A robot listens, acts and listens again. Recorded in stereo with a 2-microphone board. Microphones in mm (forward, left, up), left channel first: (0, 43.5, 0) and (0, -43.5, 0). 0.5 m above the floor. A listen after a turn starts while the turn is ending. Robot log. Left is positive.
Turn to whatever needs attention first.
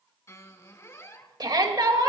note: The shout: about 55° right or 125° right.
cmd yaw -55
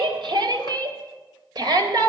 note: So it is at 60° right.
cmd yaw -60
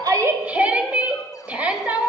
note: The shout is now 20° right.
cmd yaw -20
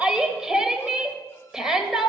end: Found it: a shout, straight ahead.